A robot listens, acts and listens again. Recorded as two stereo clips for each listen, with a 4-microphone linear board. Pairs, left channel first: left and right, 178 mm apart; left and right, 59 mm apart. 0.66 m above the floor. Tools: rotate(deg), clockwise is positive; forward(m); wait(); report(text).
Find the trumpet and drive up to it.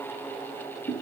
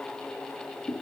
wait()
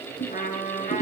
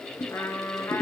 rotate(-45)
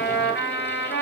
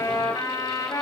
rotate(-90)
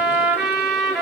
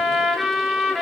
forward(1.0)
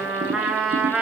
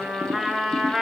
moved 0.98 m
forward(1.0)
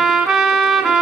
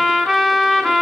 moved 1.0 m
forward(1.0)
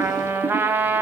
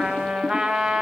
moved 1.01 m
rotate(10)
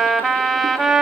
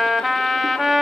forward(1.0)
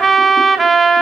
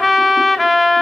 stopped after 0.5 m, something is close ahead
report("I am next to the trumpet.")